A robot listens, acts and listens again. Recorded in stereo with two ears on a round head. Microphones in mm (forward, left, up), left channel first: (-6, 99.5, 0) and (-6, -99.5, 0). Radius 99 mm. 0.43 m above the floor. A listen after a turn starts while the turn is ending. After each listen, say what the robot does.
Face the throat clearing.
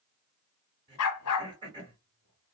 Turn 20° right.
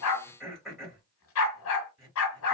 Found it: throat clearing, straight ahead.